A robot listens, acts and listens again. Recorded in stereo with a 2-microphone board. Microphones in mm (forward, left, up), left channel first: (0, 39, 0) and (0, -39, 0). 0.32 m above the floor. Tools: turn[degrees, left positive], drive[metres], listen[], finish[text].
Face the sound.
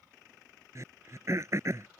Thought: The throat clearing: about 45° right or 135° right.
Action: turn[-45]
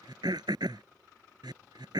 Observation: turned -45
Thought: So it is at 90° right.
Action: turn[-90]
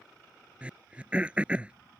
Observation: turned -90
Thought: The throat clearing is now 20° right.
Action: turn[-20]
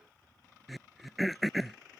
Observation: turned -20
Action: finish[Facing the throat clearing.]